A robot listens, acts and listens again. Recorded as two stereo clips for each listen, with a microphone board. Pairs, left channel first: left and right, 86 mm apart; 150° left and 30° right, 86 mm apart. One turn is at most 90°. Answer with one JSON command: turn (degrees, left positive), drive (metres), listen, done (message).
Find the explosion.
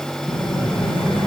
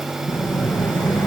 {"turn": 90}
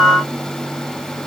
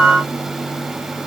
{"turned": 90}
{"done": "Facing where the explosion came from. I can't hear it now."}